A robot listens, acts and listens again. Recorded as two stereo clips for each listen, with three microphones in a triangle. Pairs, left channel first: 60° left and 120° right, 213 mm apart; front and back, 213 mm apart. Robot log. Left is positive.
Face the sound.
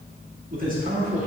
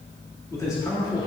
note: The man speaking: 65° right.
cmd yaw -65
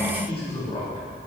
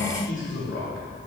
end: Facing the man speaking, 2 to 4 m away.